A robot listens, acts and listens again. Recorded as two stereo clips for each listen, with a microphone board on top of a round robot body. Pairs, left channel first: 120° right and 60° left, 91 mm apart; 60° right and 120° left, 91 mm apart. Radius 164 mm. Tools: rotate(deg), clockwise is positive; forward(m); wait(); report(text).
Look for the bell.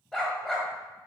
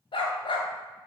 wait()
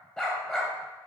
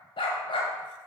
wait()
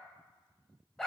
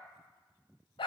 report("I can't make out a bell to turn to.")